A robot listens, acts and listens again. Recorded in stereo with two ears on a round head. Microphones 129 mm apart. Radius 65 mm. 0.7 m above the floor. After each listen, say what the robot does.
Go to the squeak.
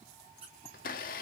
Turn 40° right.
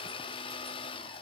Keep listening.
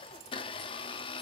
Keep listening.
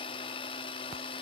I heard a squeak, but can't make it out now. It was about straight ahead or 100° right. I did not reach it.